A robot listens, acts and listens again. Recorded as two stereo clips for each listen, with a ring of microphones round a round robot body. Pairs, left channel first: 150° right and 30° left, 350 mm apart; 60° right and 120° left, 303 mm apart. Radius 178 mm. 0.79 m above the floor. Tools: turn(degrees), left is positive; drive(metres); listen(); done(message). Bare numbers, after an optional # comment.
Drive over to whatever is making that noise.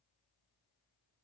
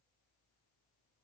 listen()
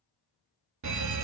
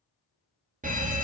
# The fire alarm: 60° left.
turn(60)
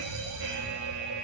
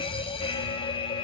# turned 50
# The fire alarm is now 10° left.
turn(10)
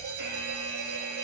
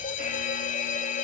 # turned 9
drive(1.0)
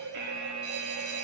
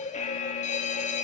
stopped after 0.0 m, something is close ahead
done("Blocked. The fire alarm is further on, straight ahead.")